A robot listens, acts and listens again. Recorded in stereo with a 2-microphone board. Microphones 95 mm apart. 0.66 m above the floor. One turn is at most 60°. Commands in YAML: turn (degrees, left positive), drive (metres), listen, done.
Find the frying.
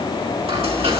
turn: -60
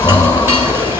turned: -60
turn: -25
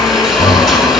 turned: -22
done: "Found it: frying, straight ahead."